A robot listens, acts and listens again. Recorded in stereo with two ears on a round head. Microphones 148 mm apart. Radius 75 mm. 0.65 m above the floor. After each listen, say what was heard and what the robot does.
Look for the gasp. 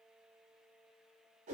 Keep listening.
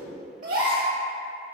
The gasp: about 50° right or 130° right. Turn 50° right.
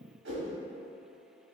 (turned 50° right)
Keep listening.
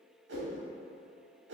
I heard a gasp, but can't make it out now. It was about straight ahead or 80° right.